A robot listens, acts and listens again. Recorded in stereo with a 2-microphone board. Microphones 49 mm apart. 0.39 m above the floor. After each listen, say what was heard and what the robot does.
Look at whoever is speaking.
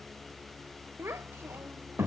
The child speaking: about 60° right or 120° right. Turn 60° right.
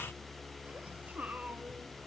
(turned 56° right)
So it is at 35° right. Turn 35° right.
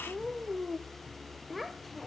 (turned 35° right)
Found it: a child speaking, straight ahead, under 1 m away.